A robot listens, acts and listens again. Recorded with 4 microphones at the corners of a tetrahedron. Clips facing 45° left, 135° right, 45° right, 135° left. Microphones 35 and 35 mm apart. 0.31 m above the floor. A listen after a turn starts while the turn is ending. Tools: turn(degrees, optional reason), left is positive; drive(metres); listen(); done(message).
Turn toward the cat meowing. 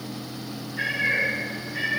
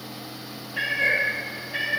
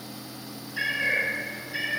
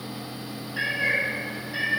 turn(degrees=-145, reason="The cat meowing: 145° right.")
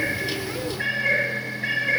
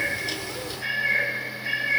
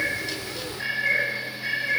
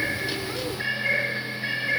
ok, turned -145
turn(degrees=55, reason="The cat meowing is now 55° left.")
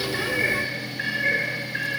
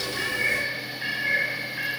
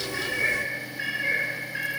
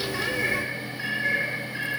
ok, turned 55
turn(degrees=30, reason="The cat meowing is now 30° left.")
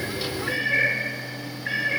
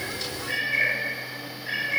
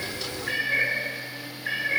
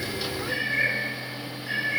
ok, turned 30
done("Found it: a cat meowing, straight ahead, over 4 m away.")